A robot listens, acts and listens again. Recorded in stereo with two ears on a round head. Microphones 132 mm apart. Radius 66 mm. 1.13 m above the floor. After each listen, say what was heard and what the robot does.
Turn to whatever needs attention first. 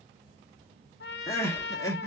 The crying: about 20° left or 160° left. Turn 20° left.
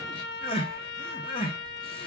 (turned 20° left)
So it is at 140° left. Turn 140° left.
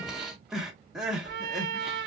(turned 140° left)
Found it: crying, straight ahead, under 1 m away.